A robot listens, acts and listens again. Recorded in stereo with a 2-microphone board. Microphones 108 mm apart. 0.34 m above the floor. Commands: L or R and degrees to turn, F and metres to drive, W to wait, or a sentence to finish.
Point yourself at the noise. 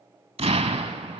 R70
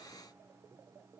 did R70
W
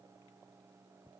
I heard an explosion, but can't make it out now. It was about straight ahead or 40° right.